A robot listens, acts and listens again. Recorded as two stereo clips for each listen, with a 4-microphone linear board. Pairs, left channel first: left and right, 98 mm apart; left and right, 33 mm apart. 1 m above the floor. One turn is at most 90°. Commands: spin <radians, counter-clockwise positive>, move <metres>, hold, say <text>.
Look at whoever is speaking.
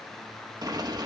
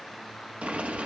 hold
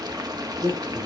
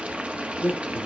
spin -1.57
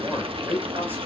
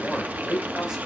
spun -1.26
spin -0.35
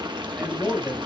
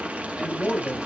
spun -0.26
say Found it: a man speaking, straight ahead, over 4 m away.